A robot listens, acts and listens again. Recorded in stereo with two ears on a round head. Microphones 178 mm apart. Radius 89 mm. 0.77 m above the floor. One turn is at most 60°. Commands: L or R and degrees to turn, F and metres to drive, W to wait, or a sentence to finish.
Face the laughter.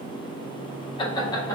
L15
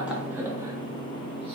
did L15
W
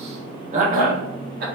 R50
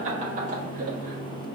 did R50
R40
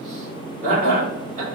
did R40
R35
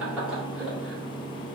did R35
Facing the laughter.